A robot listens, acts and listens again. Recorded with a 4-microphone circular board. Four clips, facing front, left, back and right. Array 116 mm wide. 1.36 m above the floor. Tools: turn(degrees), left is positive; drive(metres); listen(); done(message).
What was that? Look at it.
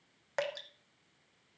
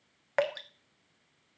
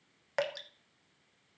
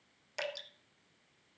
turn(degrees=95)
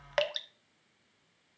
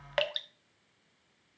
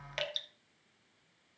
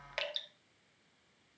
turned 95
turn(degrees=30)
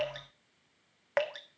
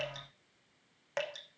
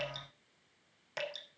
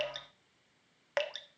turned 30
turn(degrees=-15)
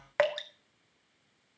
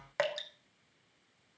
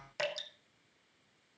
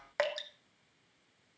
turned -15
done("Facing the dripping.")